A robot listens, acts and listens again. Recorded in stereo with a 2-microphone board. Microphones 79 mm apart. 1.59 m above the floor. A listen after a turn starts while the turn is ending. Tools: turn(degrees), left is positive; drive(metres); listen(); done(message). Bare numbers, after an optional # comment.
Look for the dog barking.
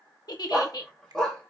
turn(30)
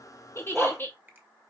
done("Facing the dog barking.")